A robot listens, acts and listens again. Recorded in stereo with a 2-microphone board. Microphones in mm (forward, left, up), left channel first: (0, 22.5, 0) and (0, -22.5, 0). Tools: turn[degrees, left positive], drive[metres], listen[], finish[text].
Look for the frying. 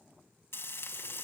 Thought: The frying: about 70° left or 110° left.
Action: turn[70]
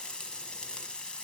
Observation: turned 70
Thought: So it is at 20° left.
Action: turn[20]
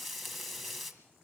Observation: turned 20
Action: finish[Found it: frying, straight ahead.]